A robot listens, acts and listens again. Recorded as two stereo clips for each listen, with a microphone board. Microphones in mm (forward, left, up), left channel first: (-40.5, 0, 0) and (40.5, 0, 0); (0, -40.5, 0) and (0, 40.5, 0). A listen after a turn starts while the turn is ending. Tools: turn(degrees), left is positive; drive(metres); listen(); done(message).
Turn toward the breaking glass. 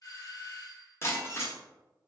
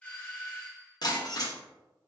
turn(degrees=-120)
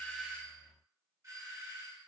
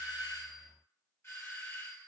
done("Facing where the breaking glass came from. I can't hear it now.")